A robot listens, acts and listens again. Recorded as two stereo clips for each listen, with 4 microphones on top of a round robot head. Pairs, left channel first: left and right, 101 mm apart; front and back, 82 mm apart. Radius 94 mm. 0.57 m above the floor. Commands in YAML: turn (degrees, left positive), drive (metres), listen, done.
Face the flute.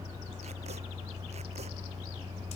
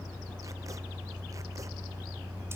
listen: true
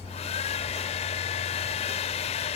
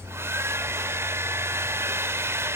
listen: true
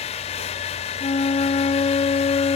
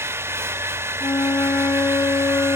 turn: 55
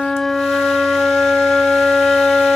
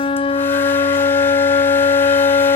done: "Facing the flute."